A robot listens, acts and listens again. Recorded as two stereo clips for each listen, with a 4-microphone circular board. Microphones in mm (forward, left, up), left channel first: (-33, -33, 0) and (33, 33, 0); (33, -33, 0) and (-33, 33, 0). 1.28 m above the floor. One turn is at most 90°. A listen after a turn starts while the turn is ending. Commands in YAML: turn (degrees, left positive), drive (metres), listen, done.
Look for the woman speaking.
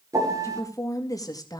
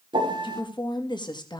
turn: -85
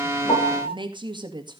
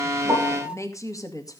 done: "Facing the woman speaking."